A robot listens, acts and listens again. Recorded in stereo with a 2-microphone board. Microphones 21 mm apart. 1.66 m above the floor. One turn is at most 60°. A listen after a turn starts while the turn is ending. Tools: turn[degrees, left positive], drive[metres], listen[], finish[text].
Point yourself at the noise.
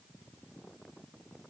Action: listen[]
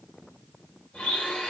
Action: turn[60]
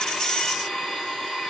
Thought: So it is at 25° left.
Action: turn[25]
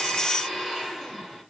Action: finish[Facing the blender, 2 to 4 m away.]